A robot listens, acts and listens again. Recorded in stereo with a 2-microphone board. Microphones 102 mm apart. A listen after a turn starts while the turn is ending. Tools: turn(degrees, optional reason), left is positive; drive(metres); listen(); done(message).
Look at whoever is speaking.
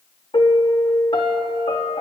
listen()
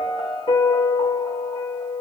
listen()
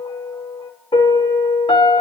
done("I can't make out anyone speaking to turn to.")